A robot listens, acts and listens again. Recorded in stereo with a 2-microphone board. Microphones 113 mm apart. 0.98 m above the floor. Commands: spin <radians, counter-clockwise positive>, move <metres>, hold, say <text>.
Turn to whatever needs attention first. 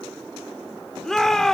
spin 0.52
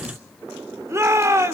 spin -0.44
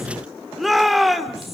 say Facing the shout, 2 to 4 m away.